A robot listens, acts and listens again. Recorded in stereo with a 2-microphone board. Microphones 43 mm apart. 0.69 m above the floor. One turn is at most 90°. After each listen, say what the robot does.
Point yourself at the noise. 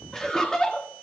Turn 20° left.
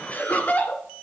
Turn 90° left.
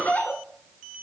Turn 45° left.
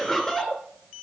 Turn 10° left.
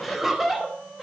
Facing the laughter.